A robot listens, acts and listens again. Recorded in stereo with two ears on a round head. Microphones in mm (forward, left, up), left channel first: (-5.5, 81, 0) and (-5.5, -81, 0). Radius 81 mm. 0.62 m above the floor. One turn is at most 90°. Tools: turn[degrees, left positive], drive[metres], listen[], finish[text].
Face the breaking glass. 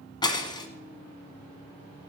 Thought: The breaking glass: about 25° left or 155° left.
Action: turn[25]
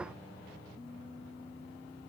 Action: listen[]
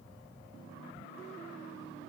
Action: finish[I heard breaking glass, but can't make it out now. It was about straight ahead or 130° left.]